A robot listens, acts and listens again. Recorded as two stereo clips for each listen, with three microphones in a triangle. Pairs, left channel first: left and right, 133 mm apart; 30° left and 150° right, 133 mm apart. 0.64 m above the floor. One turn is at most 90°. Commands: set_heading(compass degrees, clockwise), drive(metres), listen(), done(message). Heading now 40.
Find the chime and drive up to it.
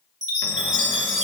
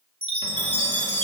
set_heading(130)
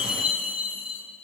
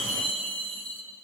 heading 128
set_heading(138)
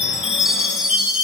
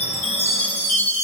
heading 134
drive(1.0)
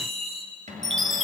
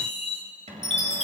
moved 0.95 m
drive(1.0)
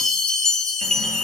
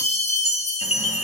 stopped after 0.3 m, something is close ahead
done("Arrived at the chime, straight ahead.")